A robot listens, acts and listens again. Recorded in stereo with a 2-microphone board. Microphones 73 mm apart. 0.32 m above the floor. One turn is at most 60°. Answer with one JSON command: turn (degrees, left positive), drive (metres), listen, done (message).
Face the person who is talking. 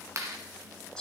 {"listen": true}
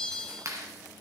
{"listen": true}
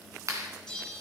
{"done": "I can't make out anyone speaking to turn to."}